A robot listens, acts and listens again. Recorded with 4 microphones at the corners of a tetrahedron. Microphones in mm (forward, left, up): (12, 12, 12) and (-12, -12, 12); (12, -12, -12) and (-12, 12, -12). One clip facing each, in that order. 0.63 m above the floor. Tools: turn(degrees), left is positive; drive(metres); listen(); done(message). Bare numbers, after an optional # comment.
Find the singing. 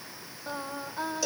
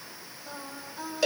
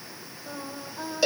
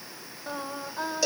# The singing: 95° left.
turn(95)
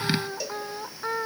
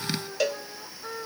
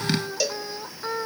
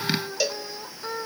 # The singing is now 25° left.
turn(25)
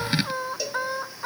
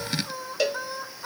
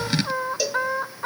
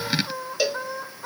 # The singing is now 15° right.
turn(-15)
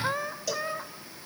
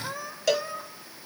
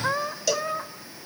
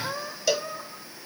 # The singing is now 15° right.
turn(-15)
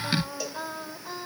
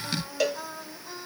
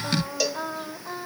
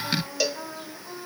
# The singing is now 20° right.
turn(-20)
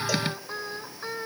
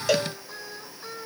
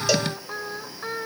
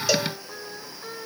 # The singing is now 10° right.
turn(-10)
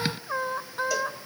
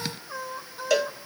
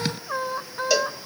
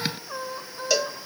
done("Facing the singing.")